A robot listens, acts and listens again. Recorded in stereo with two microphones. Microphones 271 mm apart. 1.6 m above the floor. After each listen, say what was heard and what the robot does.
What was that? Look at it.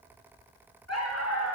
The dog barking: about 70° left or 110° left. Turn 70° left.
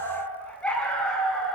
Facing the dog barking, over 4 m away.